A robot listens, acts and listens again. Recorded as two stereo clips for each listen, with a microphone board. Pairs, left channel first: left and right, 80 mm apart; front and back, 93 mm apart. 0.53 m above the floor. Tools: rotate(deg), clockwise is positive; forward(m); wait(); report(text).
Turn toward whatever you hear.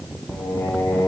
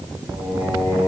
rotate(-130)
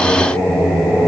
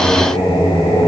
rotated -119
rotate(10)
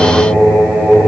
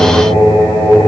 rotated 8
rotate(15)
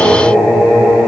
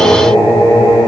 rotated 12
rotate(10)
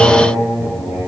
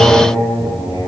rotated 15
report("Found it: singing, straight ahead, 2 to 4 m away.")